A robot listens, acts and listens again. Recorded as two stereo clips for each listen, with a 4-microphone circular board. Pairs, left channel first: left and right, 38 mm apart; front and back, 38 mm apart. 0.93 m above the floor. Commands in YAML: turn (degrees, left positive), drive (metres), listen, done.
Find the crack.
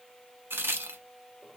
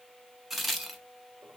turn: -95
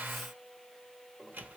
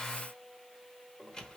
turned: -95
done: "I heard a crack from this way, but can't make it out now."